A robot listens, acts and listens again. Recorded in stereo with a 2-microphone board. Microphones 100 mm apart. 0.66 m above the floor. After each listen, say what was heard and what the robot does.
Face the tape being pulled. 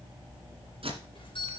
The tape being pulled: about 65° right or 115° right. Turn 65° right.
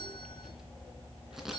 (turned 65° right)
Found it: tape being pulled, straight ahead.